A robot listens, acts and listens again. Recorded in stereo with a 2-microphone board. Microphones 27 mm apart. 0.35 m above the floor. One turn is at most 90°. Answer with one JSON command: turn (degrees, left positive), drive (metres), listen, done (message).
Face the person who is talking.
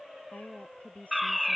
{"turn": 70}
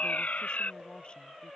{"listen": true}
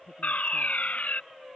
{"listen": true}
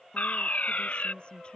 {"turn": 35}
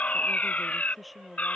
{"done": "Facing the woman speaking."}